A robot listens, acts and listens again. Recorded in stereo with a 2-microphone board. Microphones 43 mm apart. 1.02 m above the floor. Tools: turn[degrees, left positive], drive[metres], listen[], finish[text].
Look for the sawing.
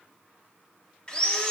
Thought: The sawing: about 25° left or 155° left.
Action: turn[25]
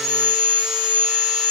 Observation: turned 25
Action: finish[Found it: sawing, straight ahead, under 1 m away.]